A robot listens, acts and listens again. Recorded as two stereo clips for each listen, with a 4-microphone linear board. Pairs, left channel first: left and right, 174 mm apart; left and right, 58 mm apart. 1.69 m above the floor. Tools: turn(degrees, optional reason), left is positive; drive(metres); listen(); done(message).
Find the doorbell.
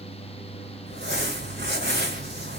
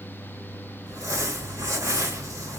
listen()
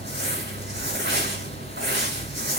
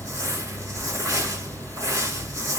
listen()
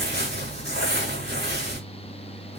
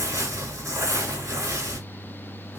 done("I can't make out a doorbell to turn to.")